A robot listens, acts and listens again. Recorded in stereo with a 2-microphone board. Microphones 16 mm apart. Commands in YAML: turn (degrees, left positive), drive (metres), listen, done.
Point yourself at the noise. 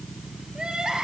turn: -90
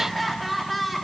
done: "Facing the crying, 2 to 4 m away."